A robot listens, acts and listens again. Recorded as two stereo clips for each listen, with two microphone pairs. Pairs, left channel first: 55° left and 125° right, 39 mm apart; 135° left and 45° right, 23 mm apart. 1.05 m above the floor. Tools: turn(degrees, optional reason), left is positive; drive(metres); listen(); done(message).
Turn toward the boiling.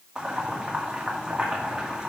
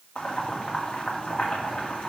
turn(degrees=165, reason="The boiling: 165° left.")
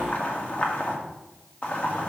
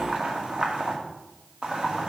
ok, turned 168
done("Found it: boiling, straight ahead.")